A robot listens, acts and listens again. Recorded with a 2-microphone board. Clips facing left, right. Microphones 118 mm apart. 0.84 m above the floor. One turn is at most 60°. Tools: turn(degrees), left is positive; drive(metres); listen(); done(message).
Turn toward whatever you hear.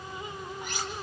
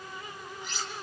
turn(degrees=55)
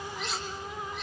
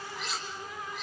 done("Found it: cutlery clinking, straight ahead, 2 to 4 m away.")